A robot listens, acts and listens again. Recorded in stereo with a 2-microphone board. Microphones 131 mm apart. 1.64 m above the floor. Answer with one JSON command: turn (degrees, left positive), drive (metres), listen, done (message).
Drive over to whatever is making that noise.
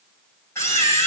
{"turn": 20}
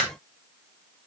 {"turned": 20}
{"drive": 1.0}
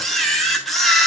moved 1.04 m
{"drive": 1.0}
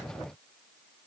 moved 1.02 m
{"listen": true}
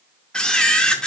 {"turn": 10}
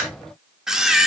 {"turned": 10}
{"drive": 1.0}
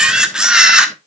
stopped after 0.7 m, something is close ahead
{"done": "Arrived at the camera shutter, straight ahead."}